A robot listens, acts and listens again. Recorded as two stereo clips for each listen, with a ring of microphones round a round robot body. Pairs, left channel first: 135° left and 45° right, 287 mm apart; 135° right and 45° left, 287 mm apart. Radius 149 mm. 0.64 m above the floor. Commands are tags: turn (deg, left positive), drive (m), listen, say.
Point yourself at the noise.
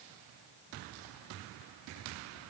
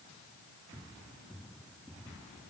<listen/>
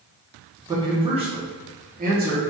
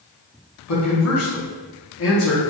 <turn deg="-95"/>
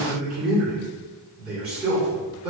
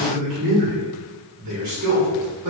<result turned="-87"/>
<turn deg="25"/>
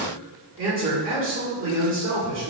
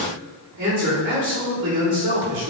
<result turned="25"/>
<say>Found it: a man speaking, straight ahead, 1 to 2 m away.</say>